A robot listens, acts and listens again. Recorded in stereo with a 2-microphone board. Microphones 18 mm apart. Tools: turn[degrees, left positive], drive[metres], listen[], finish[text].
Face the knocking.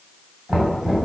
Thought: The knocking: about 45° right or 135° right.
Action: turn[-45]
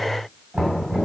Thought: So it is at 85° right.
Action: turn[-85]
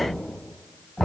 Thought: The knocking is now 20° left.
Action: turn[20]
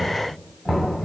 Action: finish[Facing the knocking, 2 to 4 m away.]